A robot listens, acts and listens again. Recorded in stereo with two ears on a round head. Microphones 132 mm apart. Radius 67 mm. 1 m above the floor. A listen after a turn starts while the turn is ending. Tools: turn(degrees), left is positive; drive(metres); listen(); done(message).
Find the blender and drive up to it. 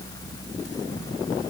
listen()
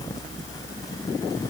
listen()
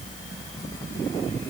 done("I can't make out a blender to turn to.")